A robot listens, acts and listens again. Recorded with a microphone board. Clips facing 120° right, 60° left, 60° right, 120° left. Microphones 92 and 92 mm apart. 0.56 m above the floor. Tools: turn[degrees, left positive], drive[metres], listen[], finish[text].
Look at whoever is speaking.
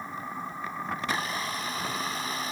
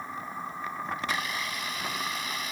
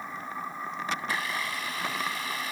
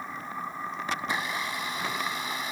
Action: listen[]
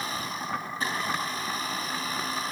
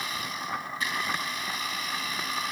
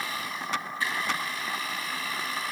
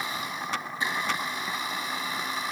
Action: listen[]
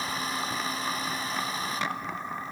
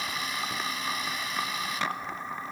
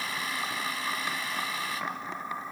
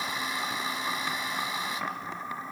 Action: finish[I can't make out anyone speaking to turn to.]